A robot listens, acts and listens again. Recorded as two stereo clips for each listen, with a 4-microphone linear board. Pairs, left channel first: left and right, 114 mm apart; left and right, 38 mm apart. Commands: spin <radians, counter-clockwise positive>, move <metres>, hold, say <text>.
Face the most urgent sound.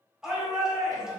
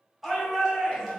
spin -0.52
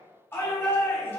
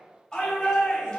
spin 0.44
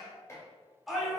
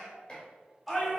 say Facing the shout.